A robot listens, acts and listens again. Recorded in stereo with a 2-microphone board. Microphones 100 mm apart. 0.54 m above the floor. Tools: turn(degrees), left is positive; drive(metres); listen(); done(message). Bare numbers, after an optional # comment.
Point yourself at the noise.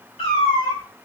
turn(90)
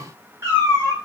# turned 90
# So it is at 35° right.
turn(-35)
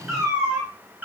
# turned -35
# The cat meowing is now 20° right.
turn(-20)
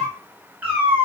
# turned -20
# The cat meowing is now 20° right.
turn(-20)
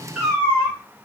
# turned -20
# The cat meowing is now 20° right.
turn(-20)
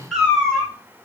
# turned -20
done("Facing the cat meowing, 1 to 2 m away.")